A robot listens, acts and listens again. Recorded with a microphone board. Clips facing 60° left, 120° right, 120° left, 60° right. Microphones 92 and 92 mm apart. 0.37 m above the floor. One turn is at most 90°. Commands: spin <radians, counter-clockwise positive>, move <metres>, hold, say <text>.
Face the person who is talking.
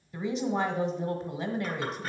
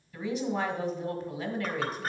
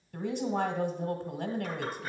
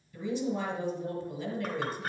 spin 1.57
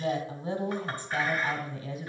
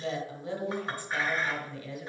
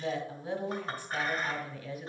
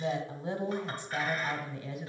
say Found it: a woman speaking, straight ahead, 1 to 2 m away.